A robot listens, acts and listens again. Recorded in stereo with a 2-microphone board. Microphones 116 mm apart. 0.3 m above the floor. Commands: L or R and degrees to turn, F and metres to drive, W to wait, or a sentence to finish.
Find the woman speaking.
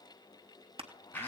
W
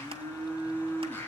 W
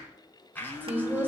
R15
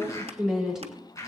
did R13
Facing the woman speaking.